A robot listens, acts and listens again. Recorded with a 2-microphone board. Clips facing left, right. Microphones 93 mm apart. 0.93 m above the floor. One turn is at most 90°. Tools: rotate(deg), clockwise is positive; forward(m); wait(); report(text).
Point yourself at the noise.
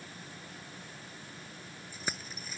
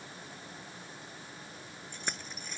rotate(-30)
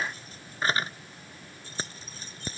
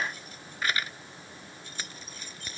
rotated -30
rotate(-90)
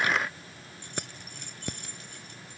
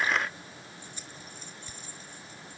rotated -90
rotate(-80)
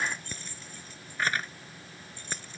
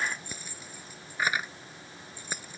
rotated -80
rotate(10)
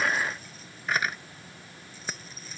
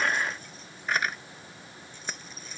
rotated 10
report("Facing the keys jangling.")